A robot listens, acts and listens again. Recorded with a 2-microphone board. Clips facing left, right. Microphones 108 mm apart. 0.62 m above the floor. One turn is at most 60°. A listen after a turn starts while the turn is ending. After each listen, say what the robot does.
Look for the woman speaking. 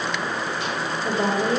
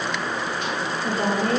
Turn 20° left.
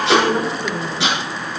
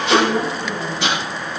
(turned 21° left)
Turn 30° left.
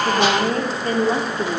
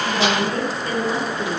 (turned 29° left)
Turn 35° left.
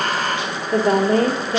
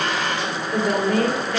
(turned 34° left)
Turn 35° left.
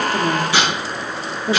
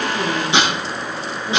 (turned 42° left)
Turn 60° left.
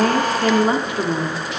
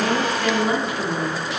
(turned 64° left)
Turn 35° left.
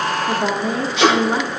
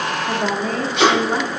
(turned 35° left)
Turn 10° left.
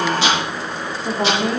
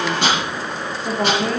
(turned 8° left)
Facing the woman speaking, 1 to 2 m away.